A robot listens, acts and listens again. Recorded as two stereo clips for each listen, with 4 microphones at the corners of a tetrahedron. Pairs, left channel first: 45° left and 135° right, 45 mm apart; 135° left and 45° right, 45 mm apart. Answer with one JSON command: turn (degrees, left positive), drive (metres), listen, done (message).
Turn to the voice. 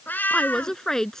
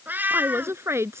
{"turn": -35}
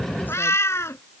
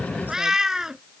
{"listen": true}
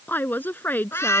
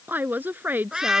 {"done": "Found it: a woman speaking, straight ahead."}